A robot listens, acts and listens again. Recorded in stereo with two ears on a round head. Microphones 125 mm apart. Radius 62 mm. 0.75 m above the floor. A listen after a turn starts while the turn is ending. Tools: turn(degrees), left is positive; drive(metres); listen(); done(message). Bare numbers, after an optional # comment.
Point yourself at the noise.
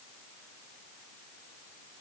listen()
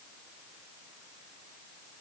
listen()
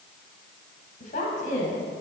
# The woman speaking: about 60° left or 120° left.
turn(60)
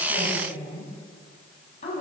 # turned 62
# So it is at 50° left.
turn(50)
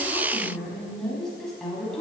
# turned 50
done("Facing the woman speaking.")